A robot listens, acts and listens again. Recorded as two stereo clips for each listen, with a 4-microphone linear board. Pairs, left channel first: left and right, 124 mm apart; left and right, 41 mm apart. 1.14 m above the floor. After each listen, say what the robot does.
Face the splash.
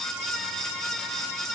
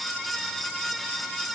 Keep listening.
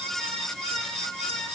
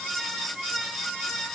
Keep listening.
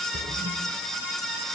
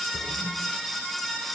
Turn 70° right.
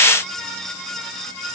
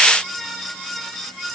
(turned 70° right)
Keep listening.
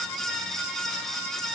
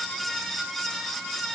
I heard a splash, but can't make it out now. It was about straight ahead or 40° right.